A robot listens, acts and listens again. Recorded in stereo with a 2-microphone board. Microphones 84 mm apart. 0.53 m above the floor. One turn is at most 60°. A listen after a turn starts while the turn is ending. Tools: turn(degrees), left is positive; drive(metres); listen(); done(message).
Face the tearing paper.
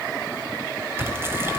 turn(degrees=-30)
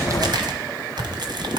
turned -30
turn(degrees=-60)
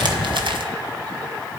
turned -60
turn(degrees=-60)
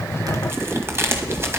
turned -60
turn(degrees=-30)
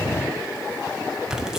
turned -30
turn(degrees=-10)
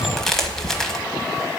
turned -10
done("Facing the tearing paper, 1 to 2 m away.")